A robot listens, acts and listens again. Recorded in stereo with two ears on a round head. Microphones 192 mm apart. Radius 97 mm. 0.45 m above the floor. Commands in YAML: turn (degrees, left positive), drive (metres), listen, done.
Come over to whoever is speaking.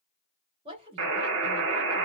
turn: -25
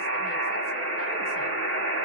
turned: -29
listen: true
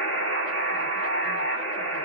listen: true
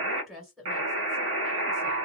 drive: 1.0
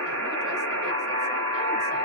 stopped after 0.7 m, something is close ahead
listen: true
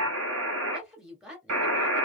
done: "I am next to the woman speaking."